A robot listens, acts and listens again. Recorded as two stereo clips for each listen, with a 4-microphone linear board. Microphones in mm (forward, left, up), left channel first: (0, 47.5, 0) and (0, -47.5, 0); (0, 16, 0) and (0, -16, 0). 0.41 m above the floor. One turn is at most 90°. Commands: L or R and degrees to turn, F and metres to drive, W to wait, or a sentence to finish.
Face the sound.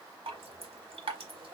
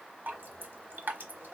R90
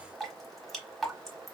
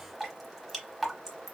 Found it: dripping, straight ahead, 1 to 2 m away.